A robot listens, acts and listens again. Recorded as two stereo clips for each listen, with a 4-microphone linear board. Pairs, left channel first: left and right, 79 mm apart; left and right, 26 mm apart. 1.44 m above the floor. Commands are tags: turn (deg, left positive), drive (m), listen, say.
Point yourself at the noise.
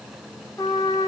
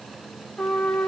<turn deg="45"/>
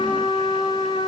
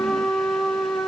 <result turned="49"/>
<turn deg="85"/>
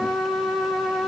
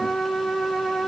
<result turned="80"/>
<say>Facing the trumpet.</say>